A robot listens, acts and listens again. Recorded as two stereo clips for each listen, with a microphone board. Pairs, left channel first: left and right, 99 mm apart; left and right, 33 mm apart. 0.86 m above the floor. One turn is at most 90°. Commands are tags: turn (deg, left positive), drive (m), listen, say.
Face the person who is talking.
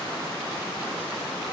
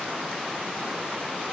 <listen/>
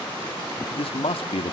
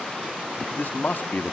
<turn deg="70"/>
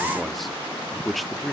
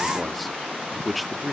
<say>Found it: a man speaking, straight ahead, 1 to 2 m away.</say>